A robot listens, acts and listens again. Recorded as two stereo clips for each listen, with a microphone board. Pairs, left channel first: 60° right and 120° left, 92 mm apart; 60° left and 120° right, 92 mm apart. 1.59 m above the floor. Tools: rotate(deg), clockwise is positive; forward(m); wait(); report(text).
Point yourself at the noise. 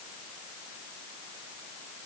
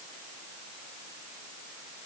wait()
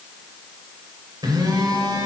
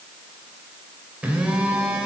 rotate(-160)
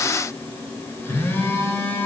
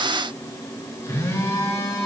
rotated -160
report("Facing the phone buzzing, 2 to 4 m away.")